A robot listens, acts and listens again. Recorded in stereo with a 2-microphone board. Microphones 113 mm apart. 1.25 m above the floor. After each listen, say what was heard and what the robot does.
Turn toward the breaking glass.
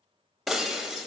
Turn 30° left.
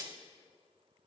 So it is at 30° right. Turn 30° right.
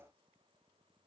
I heard breaking glass from this way, but can't make it out now.